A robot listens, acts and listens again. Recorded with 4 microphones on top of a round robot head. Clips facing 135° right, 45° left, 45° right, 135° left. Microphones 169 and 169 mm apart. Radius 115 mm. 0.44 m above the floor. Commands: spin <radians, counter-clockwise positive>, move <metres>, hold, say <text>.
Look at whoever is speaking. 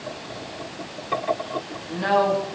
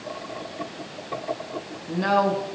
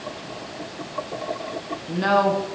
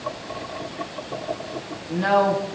say Facing the woman speaking.